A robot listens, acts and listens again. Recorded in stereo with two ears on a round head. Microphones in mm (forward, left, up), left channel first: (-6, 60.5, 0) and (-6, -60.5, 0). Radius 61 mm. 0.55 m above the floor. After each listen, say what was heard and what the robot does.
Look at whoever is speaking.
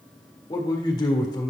The man speaking: about 25° left or 155° left. Turn 25° left.
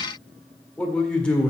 So it is at 10° left. Turn 10° left.
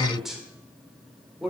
Facing the man speaking.